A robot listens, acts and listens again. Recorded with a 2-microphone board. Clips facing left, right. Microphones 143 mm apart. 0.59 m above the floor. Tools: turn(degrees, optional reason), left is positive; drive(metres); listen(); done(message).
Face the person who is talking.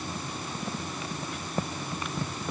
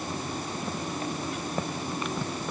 listen()
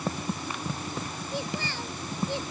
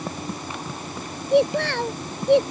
turn(degrees=-90)
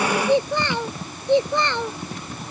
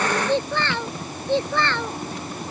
turn(degrees=20, reason="So it is at 20° left.")
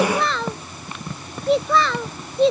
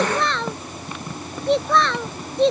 done("Found it: a child speaking, straight ahead.")